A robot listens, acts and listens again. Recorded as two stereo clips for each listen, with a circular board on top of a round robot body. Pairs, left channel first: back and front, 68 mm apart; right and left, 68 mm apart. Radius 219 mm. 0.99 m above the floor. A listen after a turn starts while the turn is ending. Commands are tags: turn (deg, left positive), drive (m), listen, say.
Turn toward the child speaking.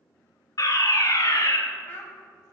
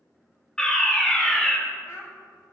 <turn deg="-120"/>
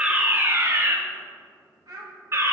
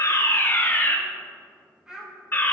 <turn deg="10"/>
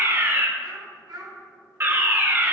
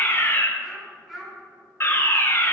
<say>Found it: a child speaking, straight ahead.</say>